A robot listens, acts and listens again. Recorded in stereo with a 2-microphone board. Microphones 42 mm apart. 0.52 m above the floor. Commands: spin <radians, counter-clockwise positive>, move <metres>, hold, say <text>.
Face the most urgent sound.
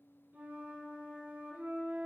hold
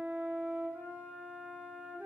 hold
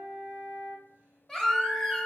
spin 0.52
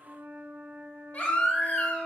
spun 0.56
spin 2.36
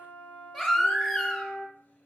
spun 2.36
say Facing the baby crying, 1 to 2 m away.